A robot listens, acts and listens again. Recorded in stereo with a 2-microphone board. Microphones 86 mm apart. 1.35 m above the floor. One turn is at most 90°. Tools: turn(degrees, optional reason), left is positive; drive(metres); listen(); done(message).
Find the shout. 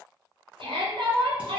turn(degrees=-70, reason="The shout: about 70° right or 110° right.")
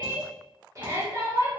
turn(degrees=-40, reason="So it is at 40° right.")
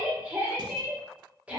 turn(degrees=-15, reason="The shout is now 15° right.")
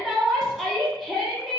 done("Found it: a shout, straight ahead.")